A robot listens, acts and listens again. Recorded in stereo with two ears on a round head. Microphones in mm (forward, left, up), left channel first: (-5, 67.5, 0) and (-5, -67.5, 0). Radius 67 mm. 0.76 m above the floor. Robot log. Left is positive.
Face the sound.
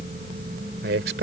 cmd yaw -90
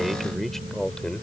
end: Facing the man speaking.